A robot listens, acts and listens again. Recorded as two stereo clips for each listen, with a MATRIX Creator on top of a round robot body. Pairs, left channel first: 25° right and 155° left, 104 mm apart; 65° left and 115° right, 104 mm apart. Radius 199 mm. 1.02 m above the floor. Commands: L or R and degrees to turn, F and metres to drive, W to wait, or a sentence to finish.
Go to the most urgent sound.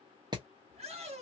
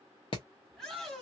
L155
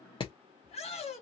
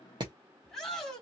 R15
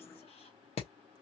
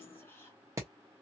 W
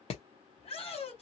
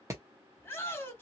F1.0
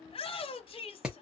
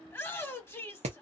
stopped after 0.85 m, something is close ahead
Arrived at the shout, straight ahead.